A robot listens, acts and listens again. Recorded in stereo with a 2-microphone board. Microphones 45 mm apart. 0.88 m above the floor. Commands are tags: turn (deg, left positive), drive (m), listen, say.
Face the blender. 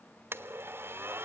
<turn deg="-60"/>
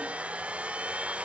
<turn deg="-35"/>
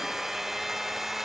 <turn deg="-10"/>
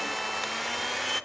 <say>Facing the blender, under 1 m away.</say>